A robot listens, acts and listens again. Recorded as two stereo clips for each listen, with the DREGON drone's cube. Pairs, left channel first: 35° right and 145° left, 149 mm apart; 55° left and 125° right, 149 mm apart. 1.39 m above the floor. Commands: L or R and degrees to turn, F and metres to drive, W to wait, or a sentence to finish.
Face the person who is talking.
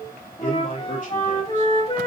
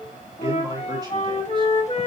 R60
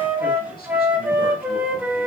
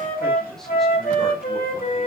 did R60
W
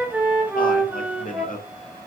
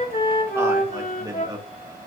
R65
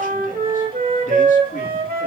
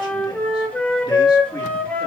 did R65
W
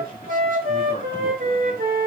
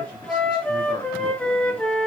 W
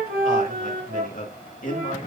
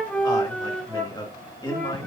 Facing the man speaking.